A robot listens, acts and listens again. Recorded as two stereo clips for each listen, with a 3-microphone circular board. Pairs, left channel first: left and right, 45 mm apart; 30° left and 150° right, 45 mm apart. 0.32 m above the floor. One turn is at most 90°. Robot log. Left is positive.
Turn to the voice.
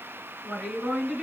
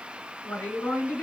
note: The woman speaking: 10° right.
cmd yaw -10
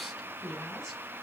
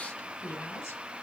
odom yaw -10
end: Facing the woman speaking.